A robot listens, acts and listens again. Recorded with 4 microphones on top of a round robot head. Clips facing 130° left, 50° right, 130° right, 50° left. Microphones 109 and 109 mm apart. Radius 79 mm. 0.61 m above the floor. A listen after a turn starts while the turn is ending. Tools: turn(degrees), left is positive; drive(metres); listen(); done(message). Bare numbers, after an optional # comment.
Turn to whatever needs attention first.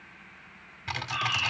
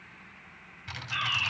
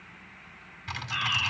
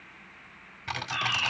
# The fire alarm: 40° right.
turn(-40)
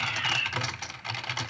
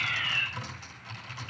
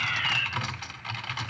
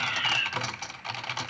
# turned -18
# The fire alarm is now 25° right.
turn(-25)
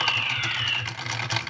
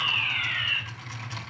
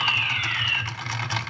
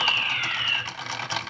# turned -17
done("Found it: a fire alarm, straight ahead.")